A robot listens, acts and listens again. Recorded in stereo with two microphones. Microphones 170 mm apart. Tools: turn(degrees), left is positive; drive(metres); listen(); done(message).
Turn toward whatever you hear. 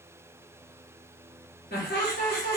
turn(degrees=70)
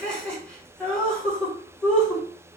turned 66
done("Facing the laughter, 1 to 2 m away.")